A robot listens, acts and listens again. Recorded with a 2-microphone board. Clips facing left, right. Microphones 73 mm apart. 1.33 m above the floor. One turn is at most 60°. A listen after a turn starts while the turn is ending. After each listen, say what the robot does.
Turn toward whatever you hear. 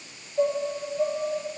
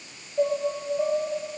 Turn 30° right.
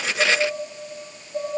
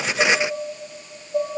Turn 60° right.
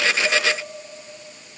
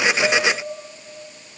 Turn 60° right.
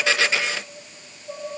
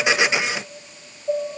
Turn 40° right.
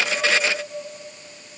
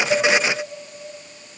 Keep listening.
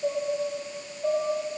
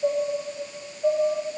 Turn 10° right.
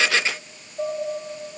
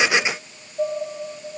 Facing the dishes clattering.